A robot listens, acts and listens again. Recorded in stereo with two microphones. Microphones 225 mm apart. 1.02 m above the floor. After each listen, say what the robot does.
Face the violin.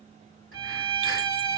Turn 25° left.
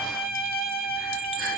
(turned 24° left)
Turn 130° left.
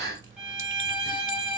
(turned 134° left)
Found it: a violin, straight ahead, 1 to 2 m away.